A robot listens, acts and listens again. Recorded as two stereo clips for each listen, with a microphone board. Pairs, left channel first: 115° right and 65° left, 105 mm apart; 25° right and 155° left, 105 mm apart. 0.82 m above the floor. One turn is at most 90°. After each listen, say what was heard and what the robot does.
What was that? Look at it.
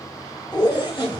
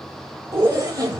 The zipper: 150° right. Turn 90° right.
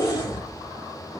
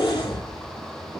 The zipper is now 60° right. Turn 60° right.
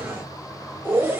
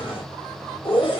Found it: a zipper, straight ahead.